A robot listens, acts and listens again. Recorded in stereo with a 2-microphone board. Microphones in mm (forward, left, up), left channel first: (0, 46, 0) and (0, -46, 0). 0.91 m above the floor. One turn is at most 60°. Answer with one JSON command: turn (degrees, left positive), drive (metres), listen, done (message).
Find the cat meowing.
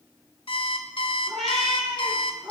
{"turn": 30}
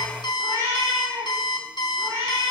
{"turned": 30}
{"turn": -35}
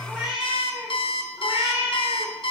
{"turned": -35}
{"turn": -10}
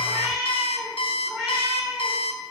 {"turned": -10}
{"done": "Found it: a cat meowing, straight ahead."}